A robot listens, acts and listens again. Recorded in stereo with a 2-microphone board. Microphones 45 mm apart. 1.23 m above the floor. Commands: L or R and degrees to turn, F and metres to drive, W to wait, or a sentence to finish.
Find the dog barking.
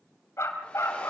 L90
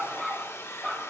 R10
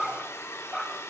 Found it: a dog barking, straight ahead.